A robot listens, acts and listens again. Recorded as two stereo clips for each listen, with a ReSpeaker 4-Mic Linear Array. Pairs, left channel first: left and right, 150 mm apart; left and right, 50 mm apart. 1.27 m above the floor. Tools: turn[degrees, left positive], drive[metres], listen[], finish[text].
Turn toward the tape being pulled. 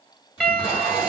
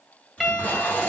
Thought: The tape being pulled: about 30° left or 150° left.
Action: turn[30]
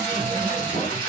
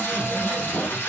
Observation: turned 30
Thought: So it is at 120° left.
Action: turn[120]
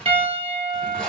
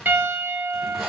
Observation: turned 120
Action: finish[Facing the tape being pulled, 2 to 4 m away.]